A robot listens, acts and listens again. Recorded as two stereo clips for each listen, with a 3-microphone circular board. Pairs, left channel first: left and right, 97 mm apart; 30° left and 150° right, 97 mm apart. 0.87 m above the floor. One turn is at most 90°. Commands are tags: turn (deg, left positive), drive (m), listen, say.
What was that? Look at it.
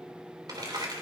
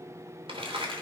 <turn deg="-90"/>
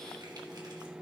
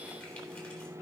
<turn deg="-40"/>
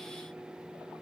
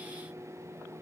<listen/>
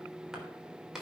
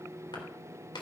<say>Facing the crumpling, 2 to 4 m away.</say>